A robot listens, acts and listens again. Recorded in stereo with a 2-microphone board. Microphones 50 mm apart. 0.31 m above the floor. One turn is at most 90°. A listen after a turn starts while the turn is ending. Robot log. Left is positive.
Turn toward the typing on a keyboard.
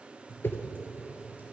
note: The typing on a keyboard: about 45° right or 135° right.
cmd yaw -45
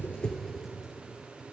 end: Facing the typing on a keyboard.